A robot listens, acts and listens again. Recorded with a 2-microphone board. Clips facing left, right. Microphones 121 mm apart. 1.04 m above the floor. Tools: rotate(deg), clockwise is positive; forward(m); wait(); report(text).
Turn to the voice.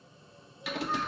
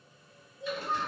rotate(20)
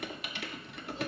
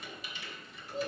rotate(135)
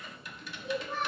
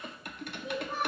rotate(15)
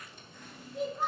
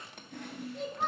report("Facing the child speaking, 2 to 4 m away.")